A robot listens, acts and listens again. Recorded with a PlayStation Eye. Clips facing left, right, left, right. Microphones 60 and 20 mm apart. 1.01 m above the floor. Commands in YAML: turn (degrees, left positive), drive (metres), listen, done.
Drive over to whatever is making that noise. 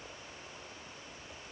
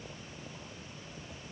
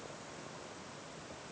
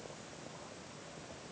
listen: true
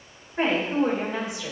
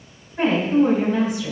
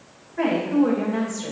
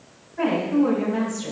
turn: 30
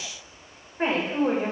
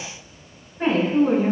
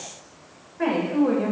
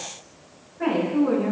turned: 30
turn: 120
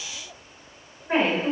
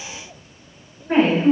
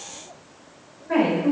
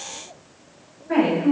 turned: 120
drive: 1.0
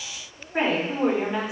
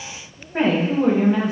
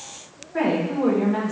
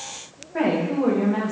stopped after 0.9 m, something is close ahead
done: "I am next to the woman speaking."